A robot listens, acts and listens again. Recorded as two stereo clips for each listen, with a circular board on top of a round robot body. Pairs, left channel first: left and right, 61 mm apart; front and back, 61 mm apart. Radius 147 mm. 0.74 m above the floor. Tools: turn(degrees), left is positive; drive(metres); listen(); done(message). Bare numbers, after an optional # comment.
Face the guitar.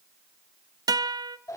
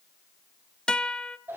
# The guitar: 80° right.
turn(-80)
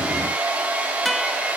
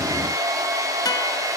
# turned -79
listen()
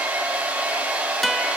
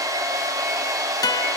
done("Found it: a guitar, straight ahead.")